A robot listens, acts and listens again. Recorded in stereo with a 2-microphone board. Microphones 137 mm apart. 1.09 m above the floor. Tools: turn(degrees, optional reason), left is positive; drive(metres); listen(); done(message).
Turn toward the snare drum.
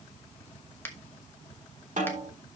turn(degrees=-70, reason="The snare drum: about 70° right or 110° right.")
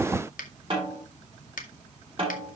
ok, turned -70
turn(degrees=-40, reason="So it is at 40° right.")
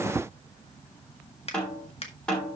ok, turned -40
done("Found it: a snare drum, straight ahead, over 4 m away.")